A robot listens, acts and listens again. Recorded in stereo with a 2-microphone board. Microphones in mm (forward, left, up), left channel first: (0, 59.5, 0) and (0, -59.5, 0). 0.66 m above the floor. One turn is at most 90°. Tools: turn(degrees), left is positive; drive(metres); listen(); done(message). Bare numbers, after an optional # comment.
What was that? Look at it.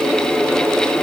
listen()
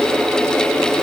listen()
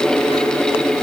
done("I can't make out anything to turn to.")